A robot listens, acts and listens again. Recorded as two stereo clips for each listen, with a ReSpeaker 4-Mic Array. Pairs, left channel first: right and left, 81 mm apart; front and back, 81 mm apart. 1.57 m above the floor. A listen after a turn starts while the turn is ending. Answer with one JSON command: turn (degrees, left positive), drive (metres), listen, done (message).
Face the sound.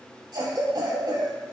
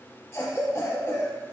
{"turn": 65}
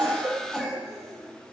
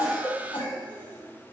{"turn": 10}
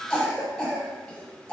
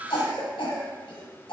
{"done": "Facing the cough, 1 to 2 m away."}